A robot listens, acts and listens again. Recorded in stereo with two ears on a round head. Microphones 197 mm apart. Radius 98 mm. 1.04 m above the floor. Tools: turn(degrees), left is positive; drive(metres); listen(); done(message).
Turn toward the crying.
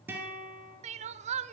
turn(degrees=-35)
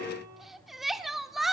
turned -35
done("Facing the crying, 1 to 2 m away.")